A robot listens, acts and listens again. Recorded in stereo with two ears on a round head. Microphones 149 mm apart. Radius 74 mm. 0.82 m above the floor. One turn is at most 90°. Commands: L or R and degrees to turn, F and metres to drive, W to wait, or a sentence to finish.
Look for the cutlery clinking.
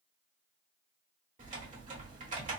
W
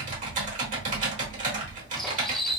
L30
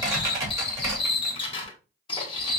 L90
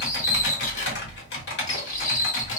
L50
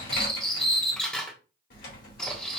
Found it: cutlery clinking, straight ahead, 1 to 2 m away.